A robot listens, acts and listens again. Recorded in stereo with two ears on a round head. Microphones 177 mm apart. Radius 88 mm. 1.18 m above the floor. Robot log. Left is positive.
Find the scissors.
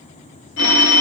cmd idle
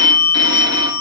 cmd idle
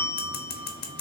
note: The scissors: about 50° left or 130° left.
cmd yaw +50
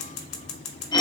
note: So it is at 80° left.
cmd yaw +80
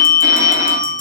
cmd idle
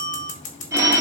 note: The scissors is now 40° left.
cmd yaw +40
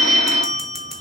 cmd idle
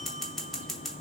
end: Facing the scissors.